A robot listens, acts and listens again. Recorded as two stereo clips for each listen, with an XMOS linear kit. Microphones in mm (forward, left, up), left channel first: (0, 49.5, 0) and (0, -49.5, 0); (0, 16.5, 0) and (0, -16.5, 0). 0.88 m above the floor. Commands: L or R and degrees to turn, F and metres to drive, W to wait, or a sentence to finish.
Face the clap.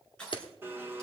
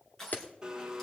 L55
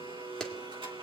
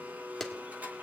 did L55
Facing the clap, 1 to 2 m away.